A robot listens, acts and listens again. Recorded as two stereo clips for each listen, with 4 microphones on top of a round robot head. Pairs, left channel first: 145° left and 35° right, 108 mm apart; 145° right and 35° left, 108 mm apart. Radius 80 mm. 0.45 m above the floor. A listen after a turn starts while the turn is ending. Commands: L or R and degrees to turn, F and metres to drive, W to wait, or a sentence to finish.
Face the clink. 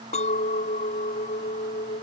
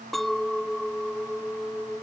L125
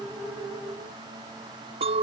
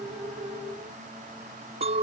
Found it: a clink, straight ahead.